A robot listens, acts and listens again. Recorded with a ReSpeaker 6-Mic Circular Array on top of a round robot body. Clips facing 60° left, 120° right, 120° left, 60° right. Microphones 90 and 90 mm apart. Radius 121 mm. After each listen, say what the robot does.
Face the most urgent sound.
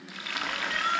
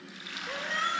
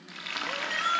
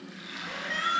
Turn 175° right.
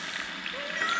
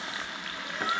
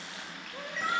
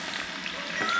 Turn 40° left.
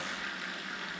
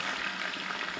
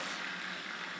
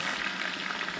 Keep listening.
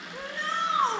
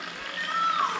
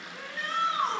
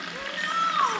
Facing the shout, over 4 m away.